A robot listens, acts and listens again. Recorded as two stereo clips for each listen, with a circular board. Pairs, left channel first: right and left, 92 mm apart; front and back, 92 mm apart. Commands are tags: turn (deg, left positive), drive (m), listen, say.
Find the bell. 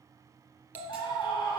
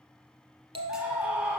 <turn deg="160"/>
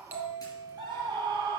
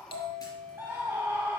<turn deg="20"/>
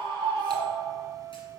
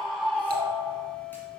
<say>Facing the bell.</say>